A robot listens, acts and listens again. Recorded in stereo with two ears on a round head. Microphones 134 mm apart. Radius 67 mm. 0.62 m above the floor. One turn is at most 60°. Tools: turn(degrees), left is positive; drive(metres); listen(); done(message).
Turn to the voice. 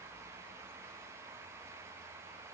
listen()
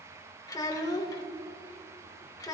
turn(degrees=25)
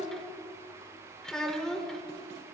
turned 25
done("Found it: a child speaking, straight ahead, 1 to 2 m away.")